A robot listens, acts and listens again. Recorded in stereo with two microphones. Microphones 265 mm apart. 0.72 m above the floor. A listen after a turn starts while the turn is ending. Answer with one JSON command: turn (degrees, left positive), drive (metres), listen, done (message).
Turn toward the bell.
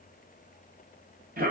{"listen": true}
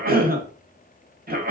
{"listen": true}
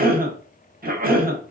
{"done": "I can't make out a bell, only a cough."}